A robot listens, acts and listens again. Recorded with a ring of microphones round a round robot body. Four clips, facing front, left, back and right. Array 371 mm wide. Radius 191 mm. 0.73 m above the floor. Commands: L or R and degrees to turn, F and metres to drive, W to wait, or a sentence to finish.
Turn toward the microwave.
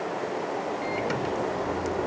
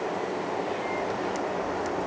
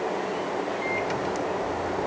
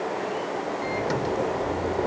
R75
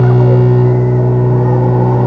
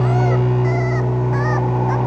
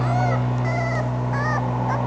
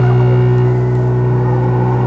R15
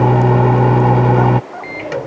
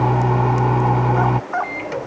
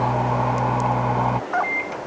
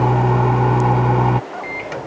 Found it: a microwave, straight ahead.